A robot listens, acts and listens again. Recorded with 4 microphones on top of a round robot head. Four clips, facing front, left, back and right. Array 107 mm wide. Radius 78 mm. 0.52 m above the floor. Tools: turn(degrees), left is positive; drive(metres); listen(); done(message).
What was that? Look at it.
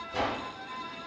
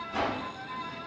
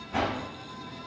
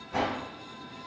turn(degrees=-135)
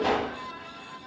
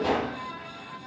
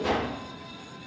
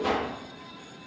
turn(degrees=10)
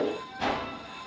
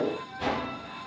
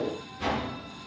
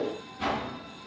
done("Found it: a whoosh, straight ahead.")